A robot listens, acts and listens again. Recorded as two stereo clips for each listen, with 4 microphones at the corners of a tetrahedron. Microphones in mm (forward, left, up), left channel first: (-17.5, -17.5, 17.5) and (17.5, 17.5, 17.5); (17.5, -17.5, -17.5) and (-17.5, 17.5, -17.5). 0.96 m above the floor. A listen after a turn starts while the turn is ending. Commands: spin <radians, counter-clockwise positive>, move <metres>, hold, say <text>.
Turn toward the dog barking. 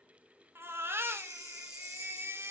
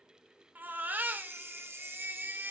hold
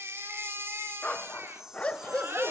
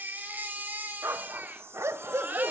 spin 2.79
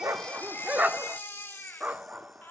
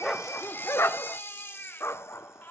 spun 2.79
spin -0.26
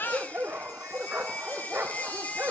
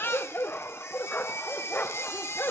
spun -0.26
say Found it: a dog barking, straight ahead.